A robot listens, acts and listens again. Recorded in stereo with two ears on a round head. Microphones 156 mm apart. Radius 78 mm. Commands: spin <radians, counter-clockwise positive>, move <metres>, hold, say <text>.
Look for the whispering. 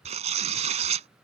hold
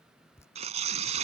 hold
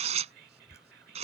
spin -1.05
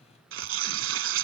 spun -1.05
hold
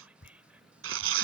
hold
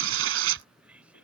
spin -0.17
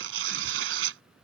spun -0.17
hold
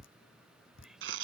hold
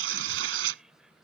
say Facing where the whispering came from. I can't hear it now.